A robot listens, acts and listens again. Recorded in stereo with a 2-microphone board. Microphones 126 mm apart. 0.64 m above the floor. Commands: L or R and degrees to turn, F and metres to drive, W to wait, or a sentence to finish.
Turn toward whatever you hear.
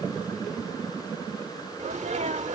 R65
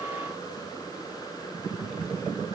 W
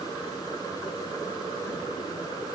I heard a sneeze, but can't make it out now. It was about straight ahead or 50° right.